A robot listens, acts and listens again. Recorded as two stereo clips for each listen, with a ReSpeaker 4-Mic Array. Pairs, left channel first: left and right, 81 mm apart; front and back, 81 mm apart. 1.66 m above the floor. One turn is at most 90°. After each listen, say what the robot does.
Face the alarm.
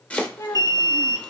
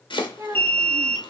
Turn 65° right.
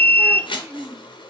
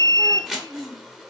Turn 15° left.
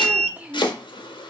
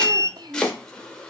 Facing the alarm.